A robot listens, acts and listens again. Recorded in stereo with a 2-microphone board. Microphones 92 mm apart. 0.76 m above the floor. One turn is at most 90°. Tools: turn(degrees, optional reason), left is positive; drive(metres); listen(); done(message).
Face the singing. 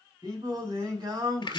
turn(degrees=-45, reason="The singing: about 45° right or 135° right.")
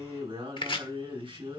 turn(degrees=-85, reason="So it is at 85° right.")
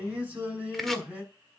turn(degrees=-15, reason="The singing is now 15° right.")
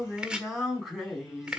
done("Found it: singing, straight ahead, over 4 m away.")